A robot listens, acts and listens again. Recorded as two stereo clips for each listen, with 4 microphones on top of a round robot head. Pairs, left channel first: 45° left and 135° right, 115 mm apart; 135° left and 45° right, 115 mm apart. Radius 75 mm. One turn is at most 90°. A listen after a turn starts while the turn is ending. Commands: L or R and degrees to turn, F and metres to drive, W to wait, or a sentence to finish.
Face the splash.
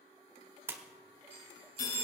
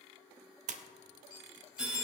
R65
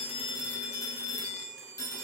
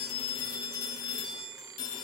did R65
Facing where the splash came from. I can't hear it now.